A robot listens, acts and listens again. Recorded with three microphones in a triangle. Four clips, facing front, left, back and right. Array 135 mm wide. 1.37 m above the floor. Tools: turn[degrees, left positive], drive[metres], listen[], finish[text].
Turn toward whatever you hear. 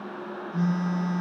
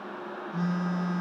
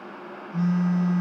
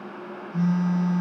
Thought: The phone buzzing: 110° left.
Action: turn[110]
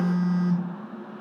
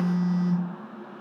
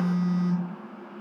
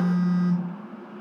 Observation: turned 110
Thought: The phone buzzing is now 30° right.
Action: turn[-30]
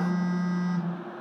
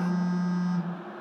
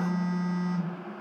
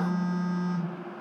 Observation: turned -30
Action: finish[Facing the phone buzzing, 2 to 4 m away.]